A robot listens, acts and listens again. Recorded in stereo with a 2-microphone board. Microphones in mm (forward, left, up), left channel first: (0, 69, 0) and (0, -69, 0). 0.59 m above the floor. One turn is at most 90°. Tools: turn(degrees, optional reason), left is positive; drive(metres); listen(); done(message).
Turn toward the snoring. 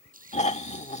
turn(degrees=55, reason="The snoring: about 55° left or 125° left.")
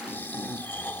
turn(degrees=15, reason="So it is at 15° left.")
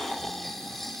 done("Found it: snoring, straight ahead.")